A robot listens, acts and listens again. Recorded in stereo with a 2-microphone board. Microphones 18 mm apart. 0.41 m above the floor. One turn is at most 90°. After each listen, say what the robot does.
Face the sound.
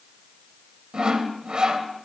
Turn 60° right.
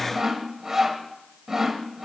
Turn 35° right.
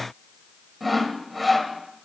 Found it: sawing, straight ahead.